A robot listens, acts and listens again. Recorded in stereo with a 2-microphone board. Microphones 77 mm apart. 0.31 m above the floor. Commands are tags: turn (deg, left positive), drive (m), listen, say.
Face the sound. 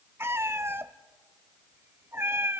<turn deg="-30"/>
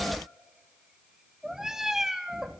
<say>Facing the cat meowing.</say>